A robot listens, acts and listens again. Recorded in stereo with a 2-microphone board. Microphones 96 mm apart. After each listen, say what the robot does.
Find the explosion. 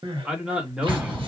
Turn 20° right.
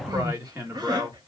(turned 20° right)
Keep listening.
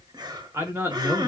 I heard an explosion, but can't make it out now. It was about straight ahead or 140° right.